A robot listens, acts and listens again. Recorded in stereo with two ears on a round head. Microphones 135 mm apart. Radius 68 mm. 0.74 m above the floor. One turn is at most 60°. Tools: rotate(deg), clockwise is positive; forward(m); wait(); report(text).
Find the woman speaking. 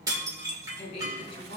rotate(-40)
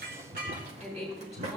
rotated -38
report("Found it: a woman speaking, straight ahead, over 4 m away.")